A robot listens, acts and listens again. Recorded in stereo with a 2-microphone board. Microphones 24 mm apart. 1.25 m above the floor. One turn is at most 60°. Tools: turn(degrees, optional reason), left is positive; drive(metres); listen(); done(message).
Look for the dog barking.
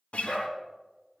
turn(degrees=30, reason="The dog barking: about 30° left or 150° left.")
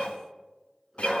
turn(degrees=10, reason="So it is at 10° left.")
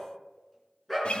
done("Found it: a dog barking, straight ahead.")